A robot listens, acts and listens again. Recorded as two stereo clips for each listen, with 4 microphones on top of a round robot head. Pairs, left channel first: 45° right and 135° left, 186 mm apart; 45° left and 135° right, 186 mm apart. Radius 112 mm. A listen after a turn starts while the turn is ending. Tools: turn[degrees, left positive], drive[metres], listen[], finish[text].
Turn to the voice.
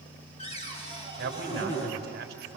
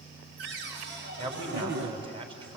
Thought: The man speaking: 165° left.
Action: turn[165]
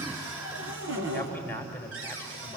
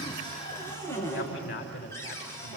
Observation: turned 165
Thought: The man speaking is now 35° left.
Action: turn[35]
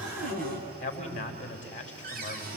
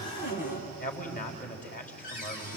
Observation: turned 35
Action: finish[Found it: a man speaking, straight ahead.]